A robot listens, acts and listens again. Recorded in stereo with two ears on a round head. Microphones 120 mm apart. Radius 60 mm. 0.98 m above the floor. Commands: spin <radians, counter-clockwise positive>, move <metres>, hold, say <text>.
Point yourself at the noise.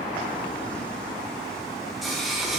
spin 0.52
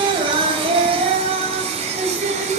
spin -0.87
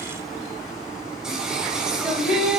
say Found it: singing, straight ahead, 2 to 4 m away.